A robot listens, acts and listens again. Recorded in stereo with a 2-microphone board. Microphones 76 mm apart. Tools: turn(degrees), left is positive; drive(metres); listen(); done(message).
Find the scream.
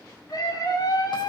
turn(degrees=50)
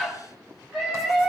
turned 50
done("Facing the scream, 2 to 4 m away.")